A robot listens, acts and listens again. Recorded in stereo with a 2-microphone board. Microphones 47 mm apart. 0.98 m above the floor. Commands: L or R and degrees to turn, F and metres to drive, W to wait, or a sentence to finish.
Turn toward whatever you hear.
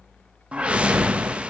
R25
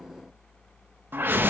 R125
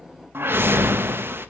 R60
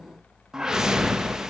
R10
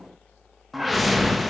Facing the whoosh.